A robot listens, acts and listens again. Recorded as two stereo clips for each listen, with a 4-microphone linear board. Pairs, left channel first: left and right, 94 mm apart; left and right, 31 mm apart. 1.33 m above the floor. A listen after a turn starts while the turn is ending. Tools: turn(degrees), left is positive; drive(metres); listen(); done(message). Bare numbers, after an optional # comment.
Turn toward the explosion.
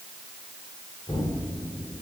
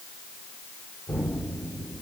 turn(90)
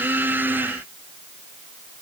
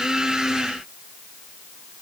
done("I heard an explosion from this way, but can't make it out now.")